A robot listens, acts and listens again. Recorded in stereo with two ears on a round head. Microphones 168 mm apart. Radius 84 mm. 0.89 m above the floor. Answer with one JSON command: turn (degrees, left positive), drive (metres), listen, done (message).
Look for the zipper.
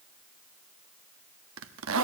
{"turn": -90}
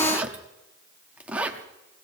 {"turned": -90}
{"done": "Facing the zipper, under 1 m away."}